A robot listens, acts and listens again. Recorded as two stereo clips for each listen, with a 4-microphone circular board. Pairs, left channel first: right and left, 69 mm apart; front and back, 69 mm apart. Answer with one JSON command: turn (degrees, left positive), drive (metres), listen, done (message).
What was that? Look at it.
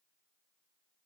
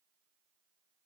{"listen": true}
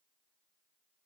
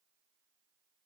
{"listen": true}
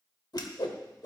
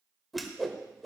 {"turn": -90}
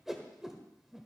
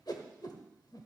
{"done": "Found it: a whoosh, straight ahead, 1 to 2 m away."}